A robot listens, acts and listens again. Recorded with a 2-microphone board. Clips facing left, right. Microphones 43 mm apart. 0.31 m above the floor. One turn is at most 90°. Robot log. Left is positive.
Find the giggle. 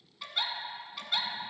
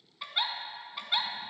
note: The giggle: about 15° right or 165° right.
cmd yaw -15
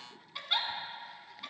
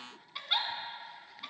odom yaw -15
end: Found it: a giggle, straight ahead, under 1 m away.